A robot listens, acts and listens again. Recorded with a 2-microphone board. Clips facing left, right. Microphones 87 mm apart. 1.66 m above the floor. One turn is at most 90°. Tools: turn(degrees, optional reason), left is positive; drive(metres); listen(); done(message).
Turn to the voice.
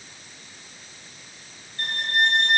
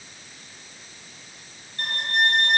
listen()
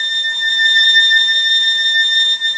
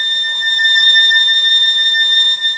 listen()
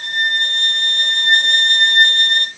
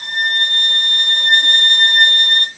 done("I can't make out anyone speaking, only a violin.")